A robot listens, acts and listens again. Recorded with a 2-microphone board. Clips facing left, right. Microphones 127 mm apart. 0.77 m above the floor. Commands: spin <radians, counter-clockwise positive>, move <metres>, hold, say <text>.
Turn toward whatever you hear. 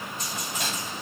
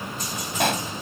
spin -1.13
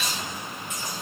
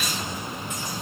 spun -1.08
hold
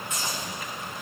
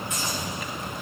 say I heard a pop, but can't make it out now. It was about straight ahead or 55° right.